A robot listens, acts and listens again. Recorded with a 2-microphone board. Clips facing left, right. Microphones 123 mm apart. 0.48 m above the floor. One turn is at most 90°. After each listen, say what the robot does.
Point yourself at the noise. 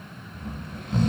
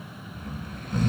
Turn 25° left.
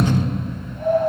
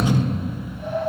Turn 90° left.
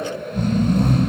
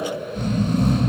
Turn 60° left.
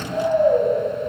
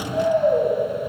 Turn 15° left.
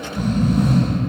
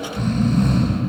Facing the snoring.